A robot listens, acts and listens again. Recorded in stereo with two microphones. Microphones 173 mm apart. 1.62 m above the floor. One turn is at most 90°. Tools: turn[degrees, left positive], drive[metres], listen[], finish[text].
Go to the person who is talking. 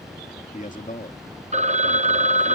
Thought: The man speaking: about 50° left or 130° left.
Action: turn[50]
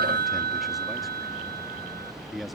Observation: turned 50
Action: drive[1.0]
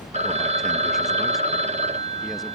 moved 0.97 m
Action: listen[]
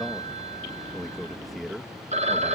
Action: drive[1.0]
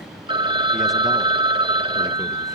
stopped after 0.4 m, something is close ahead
Action: listen[]
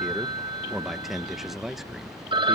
Action: finish[Arrived at the man speaking, straight ahead.]